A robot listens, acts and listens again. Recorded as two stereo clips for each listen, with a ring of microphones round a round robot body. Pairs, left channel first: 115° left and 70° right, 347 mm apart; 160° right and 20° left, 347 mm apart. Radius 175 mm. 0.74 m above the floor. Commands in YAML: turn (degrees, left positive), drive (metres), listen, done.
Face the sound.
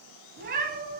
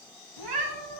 done: "Facing the cat meowing, 2 to 4 m away."